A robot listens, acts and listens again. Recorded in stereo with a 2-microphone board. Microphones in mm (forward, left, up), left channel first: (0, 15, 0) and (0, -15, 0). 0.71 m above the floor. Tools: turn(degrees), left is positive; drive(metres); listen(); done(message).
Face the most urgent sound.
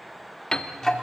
listen()
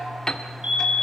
turn(degrees=-40)
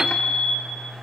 turn(degrees=-95)
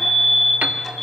turn(degrees=20)
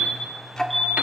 done("Found it: a fire alarm, straight ahead, 2 to 4 m away.")